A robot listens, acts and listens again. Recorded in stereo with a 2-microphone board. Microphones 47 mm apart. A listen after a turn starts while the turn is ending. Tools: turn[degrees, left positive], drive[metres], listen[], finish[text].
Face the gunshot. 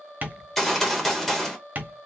Action: turn[30]
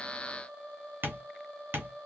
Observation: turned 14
Action: listen[]
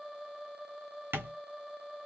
Action: finish[I heard a gunshot, but can't make it out now. It was about 5° right or 160° left.]